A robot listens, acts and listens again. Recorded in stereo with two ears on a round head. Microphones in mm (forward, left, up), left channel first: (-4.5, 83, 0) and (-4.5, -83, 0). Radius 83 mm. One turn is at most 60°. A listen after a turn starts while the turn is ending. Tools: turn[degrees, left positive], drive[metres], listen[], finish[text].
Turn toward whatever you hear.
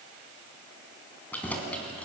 Action: turn[30]
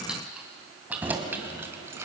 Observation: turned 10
Thought: The keys jangling: about 15° right or 165° right.
Action: turn[-15]
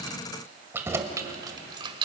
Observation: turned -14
Thought: The keys jangling: about 30° right or 150° right.
Action: turn[-30]
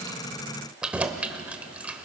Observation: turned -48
Action: finish[Found it: keys jangling, straight ahead, 1 to 2 m away.]